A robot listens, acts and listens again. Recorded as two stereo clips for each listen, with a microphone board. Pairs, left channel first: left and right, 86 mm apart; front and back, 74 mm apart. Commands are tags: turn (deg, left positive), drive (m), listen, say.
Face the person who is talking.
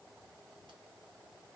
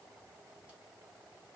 <listen/>
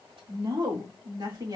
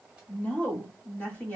<turn deg="-65"/>
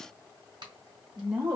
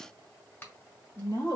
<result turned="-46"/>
<turn deg="-20"/>
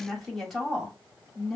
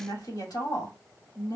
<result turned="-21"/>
<say>Facing the woman speaking.</say>